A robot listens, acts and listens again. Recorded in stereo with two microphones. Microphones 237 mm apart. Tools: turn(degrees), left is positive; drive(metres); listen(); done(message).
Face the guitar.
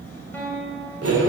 turn(degrees=30)
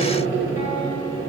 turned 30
listen()
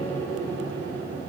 listen()
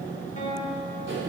turn(degrees=145)
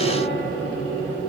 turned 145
listen()
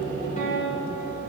turn(degrees=35)
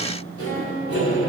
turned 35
listen()
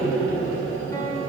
listen()
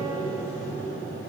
done("Facing where the guitar came from. I can't hear it now.")